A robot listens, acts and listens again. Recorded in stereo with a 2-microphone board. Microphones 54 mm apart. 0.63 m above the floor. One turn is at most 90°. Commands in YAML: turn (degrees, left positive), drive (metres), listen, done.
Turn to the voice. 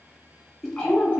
turn: 30
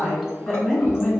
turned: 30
turn: 15
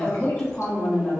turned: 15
turn: 25
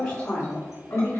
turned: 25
turn: 30
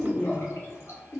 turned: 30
turn: 30
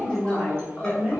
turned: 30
turn: -20
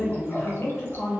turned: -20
done: "Facing the woman speaking, 2 to 4 m away."